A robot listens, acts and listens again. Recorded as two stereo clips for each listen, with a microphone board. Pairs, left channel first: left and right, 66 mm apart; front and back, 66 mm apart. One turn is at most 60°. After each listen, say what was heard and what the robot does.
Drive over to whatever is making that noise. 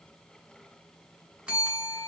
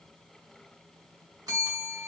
The bell: 165° right. Turn 60° right.
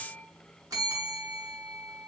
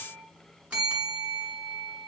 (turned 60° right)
The bell is now 110° right. Turn 60° right.
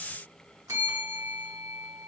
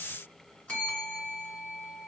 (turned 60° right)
The bell is now 70° right. Turn 60° right.
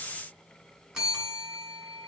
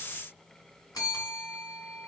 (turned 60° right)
The bell is now 15° right. Turn 15° right.
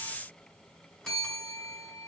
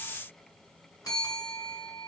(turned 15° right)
Drive 1.0 m forward.
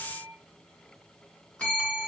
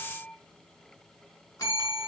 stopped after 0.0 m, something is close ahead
The bell is now 15° left. Turn 15° left.
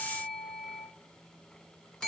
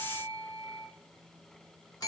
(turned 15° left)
The bell is now 10° left. Turn 10° left.
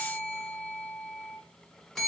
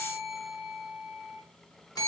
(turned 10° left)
Something is in my way. I am facing the bell but have not reached it.